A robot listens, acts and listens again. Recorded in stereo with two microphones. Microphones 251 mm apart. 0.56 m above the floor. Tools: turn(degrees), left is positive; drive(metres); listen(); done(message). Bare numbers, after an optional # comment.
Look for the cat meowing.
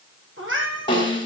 # The cat meowing: about 55° right or 125° right.
turn(-55)
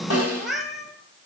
done("Found it: a cat meowing, straight ahead, 2 to 4 m away.")